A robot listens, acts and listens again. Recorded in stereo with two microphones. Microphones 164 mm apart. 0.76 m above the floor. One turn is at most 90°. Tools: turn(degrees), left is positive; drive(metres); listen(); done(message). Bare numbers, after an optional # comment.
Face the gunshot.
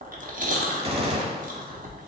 # The gunshot: about 35° right or 145° right.
turn(-35)
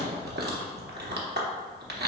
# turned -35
listen()
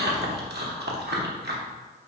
done("I heard a gunshot, but can't make it out now. It was about straight ahead or 110° right.")